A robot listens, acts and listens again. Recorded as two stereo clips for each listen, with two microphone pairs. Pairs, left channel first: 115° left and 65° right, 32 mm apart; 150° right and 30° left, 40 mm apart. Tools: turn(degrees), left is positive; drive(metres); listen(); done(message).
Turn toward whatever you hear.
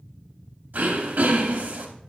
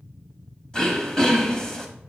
turn(degrees=-80)
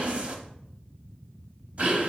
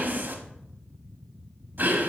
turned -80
turn(degrees=-15)
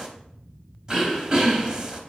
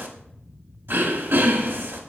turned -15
done("Found it: throat clearing, straight ahead.")